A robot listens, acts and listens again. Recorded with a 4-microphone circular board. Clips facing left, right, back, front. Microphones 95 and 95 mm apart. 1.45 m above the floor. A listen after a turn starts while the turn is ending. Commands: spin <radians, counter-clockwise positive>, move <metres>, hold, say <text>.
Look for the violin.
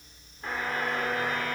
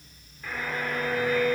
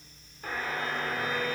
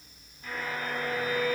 spin 0.96
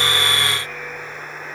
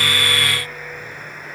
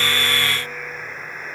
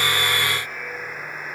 hold
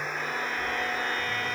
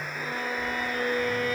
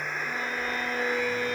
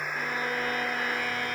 spin -0.17
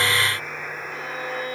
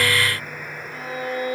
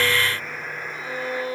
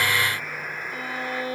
say Found it: a violin, straight ahead, over 4 m away.